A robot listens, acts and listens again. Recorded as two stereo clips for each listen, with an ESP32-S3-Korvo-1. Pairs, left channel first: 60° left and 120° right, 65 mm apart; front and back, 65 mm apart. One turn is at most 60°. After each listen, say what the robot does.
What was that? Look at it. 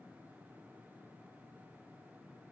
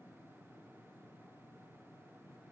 Keep listening.
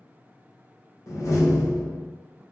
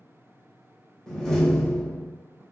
Turn 60° left.
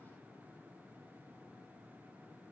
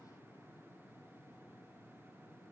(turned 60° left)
Turn 15° left.
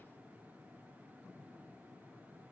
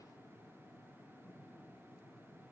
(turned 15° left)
I heard a door slam from this way, but can't make it out now.